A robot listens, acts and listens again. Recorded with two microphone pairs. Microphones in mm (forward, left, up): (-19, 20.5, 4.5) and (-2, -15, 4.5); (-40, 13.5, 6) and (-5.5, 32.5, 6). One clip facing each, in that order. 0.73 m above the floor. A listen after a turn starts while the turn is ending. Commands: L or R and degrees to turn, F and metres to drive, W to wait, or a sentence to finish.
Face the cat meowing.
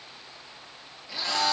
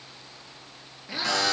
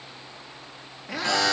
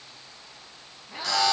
R130
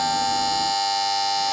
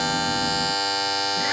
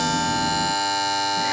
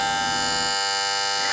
W
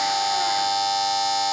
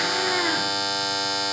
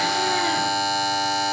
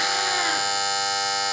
W
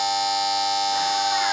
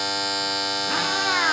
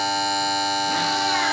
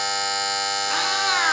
R30
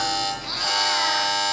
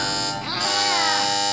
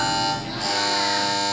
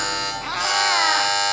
W
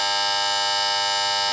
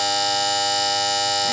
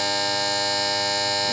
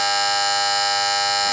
W
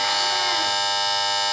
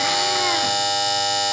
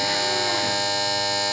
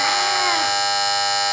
Facing where the cat meowing came from. I can't hear it now.